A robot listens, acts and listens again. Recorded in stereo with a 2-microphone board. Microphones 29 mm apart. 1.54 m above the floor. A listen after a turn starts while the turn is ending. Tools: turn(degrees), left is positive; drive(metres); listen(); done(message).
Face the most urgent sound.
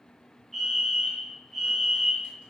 turn(degrees=30)
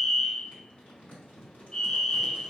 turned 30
turn(degrees=145)
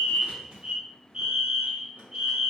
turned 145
turn(degrees=-30)
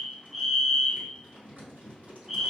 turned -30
turn(degrees=-10)
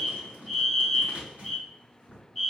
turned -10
done("Facing the fire alarm.")